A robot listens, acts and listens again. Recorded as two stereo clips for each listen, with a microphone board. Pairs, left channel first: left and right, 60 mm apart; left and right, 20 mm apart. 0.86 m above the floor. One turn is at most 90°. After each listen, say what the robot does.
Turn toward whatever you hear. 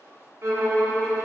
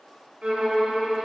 Turn 50° right.
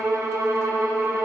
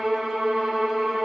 Turn 70° right.
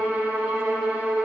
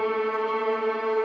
Turn 25° right.
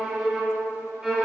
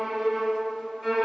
Turn 10° right.
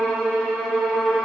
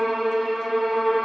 Facing the violin.